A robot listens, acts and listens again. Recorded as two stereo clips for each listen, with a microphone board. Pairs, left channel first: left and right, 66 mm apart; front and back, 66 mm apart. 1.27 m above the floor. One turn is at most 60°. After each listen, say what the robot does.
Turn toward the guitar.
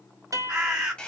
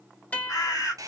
Turn 60° right.
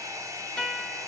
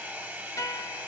Turn 15° left.
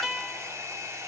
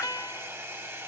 Found it: a guitar, straight ahead.